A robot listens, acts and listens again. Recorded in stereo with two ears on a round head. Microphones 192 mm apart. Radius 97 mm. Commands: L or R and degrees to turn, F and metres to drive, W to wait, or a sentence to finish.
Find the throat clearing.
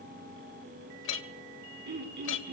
R50
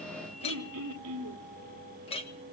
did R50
R75
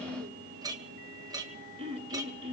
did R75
R25
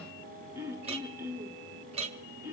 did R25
R10
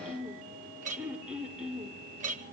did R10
Facing the throat clearing.